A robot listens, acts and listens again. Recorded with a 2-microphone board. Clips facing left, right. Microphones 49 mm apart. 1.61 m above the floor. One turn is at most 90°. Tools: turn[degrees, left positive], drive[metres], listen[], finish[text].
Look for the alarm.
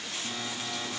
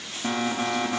Thought: The alarm: about 70° right or 110° right.
Action: turn[-70]
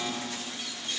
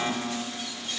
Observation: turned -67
Thought: So it is at 35° right.
Action: turn[-35]
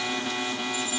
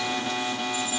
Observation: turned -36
Action: finish[Facing the alarm, 2 to 4 m away.]